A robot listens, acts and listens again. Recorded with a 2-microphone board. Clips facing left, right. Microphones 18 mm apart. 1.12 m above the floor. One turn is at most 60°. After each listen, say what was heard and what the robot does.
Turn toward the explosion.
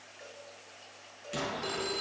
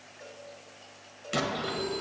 The explosion: about 40° right or 140° right. Turn 40° right.
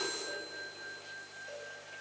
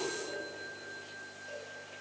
Keep listening.
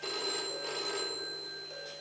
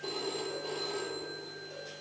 I heard an explosion, but can't make it out now. It was about straight ahead or 100° right.